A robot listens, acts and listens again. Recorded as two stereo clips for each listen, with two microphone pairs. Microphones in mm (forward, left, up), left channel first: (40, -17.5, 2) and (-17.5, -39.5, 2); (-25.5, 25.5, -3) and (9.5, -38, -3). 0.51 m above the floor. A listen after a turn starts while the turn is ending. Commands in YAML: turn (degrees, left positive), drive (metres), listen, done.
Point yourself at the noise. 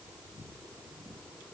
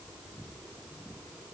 listen: true
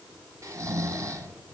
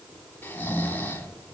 turn: 180
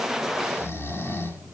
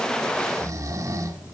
turn: -25
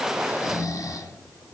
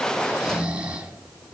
turn: 10
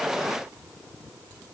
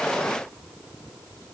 listen: true
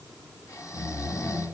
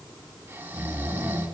done: "Facing the snoring."